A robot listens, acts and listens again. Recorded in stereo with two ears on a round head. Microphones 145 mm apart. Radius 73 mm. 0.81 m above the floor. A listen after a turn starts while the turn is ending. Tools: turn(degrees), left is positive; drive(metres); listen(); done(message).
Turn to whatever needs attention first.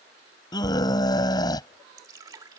turn(degrees=25)
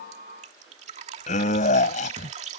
turn(degrees=130)
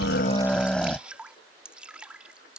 done("Facing the scream.")